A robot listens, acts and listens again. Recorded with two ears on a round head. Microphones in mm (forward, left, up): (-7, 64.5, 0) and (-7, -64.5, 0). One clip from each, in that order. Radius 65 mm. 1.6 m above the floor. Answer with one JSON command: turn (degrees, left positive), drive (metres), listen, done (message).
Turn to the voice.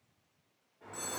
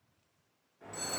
{"listen": true}
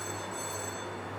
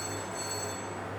{"listen": true}
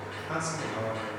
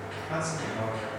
{"turn": 20}
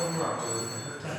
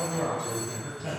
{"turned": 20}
{"done": "Found it: a man speaking, straight ahead."}